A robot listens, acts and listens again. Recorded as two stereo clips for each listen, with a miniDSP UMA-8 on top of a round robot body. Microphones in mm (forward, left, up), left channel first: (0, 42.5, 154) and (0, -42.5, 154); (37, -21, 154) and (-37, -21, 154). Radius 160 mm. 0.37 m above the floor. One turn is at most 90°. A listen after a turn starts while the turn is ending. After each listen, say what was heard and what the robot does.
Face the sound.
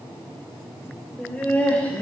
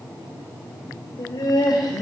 The laughter: 20° left. Turn 20° left.
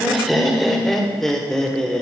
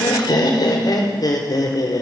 The laughter is now 10° left. Turn 10° left.
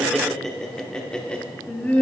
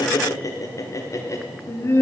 The laughter is now 25° left. Turn 25° left.
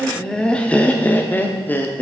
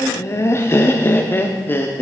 The laughter is now 35° left. Turn 35° left.
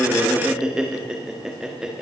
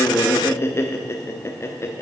The laughter is now 10° right. Turn 10° right.
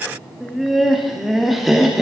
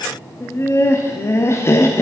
Found it: laughter, straight ahead.